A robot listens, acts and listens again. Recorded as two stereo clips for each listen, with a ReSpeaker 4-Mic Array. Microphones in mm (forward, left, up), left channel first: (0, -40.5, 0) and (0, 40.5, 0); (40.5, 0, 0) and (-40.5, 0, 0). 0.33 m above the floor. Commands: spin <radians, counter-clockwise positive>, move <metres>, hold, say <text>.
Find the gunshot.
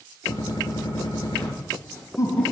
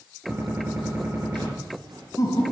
spin -2.01
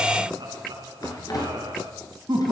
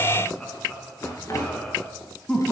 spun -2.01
say I heard a gunshot from this way, but can't make it out now.